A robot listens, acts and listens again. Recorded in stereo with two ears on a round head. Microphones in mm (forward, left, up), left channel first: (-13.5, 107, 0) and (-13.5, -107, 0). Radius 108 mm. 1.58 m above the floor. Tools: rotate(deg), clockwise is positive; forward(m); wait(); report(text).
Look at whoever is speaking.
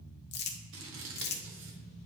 wait()
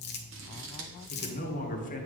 rotate(-35)
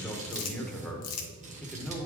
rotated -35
report("Found it: a man speaking, straight ahead.")